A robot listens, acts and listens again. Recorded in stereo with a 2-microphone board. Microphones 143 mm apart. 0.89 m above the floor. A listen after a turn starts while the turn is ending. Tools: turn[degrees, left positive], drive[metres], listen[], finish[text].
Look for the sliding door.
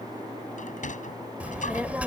Thought: The sliding door: about 65° left or 115° left.
Action: turn[65]
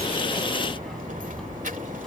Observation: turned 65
Action: listen[]
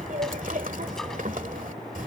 Action: listen[]
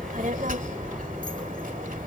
Action: finish[I heard a sliding door, but can't make it out now. It was about straight ahead or 50° left.]